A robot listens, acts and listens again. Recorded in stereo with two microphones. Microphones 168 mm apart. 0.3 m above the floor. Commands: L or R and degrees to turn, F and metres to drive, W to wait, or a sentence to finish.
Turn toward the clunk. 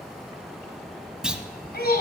R30
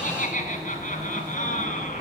W
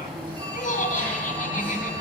I heard a clunk, but can't make it out now. It was about 25° left or 145° right.